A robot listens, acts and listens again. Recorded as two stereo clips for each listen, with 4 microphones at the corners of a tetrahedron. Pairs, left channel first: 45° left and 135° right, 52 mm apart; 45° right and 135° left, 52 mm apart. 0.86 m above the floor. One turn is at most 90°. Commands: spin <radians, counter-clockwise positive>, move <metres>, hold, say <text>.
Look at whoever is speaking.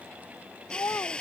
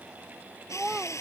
spin 0.87
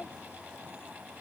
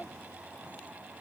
hold
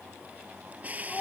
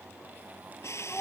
say Found it: a child speaking, straight ahead.